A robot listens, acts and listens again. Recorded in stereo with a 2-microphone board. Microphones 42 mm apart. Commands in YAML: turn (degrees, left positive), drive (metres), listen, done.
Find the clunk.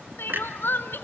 turn: -55
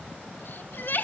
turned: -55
listen: true
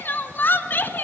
done: "I heard a clunk, but can't make it out now. It was about straight ahead or 70° right."